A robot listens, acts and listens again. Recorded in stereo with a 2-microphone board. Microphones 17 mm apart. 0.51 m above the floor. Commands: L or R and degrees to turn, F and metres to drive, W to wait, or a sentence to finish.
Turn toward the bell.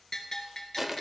L30
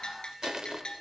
L120
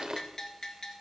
L35
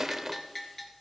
L10
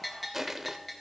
Found it: a bell, straight ahead.